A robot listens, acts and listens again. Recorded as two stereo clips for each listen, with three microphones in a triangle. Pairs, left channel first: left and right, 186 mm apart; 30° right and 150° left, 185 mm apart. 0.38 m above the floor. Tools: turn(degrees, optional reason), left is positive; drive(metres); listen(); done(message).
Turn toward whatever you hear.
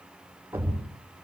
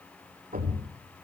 turn(degrees=-170, reason="The thud: 170° right.")
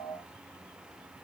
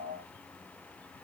done("Facing where the thud came from. I can't hear it now.")